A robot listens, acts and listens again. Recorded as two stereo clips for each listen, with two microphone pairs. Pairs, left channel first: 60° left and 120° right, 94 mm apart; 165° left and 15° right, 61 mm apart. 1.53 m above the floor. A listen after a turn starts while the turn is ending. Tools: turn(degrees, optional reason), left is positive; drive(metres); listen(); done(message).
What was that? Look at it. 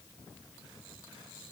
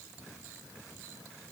listen()
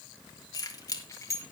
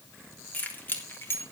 turn(degrees=115, reason="The keys jangling: 115° left.")
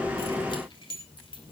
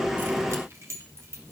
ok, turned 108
turn(degrees=30, reason="The keys jangling is now 30° left.")
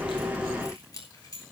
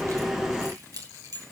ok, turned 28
done("Facing the keys jangling.")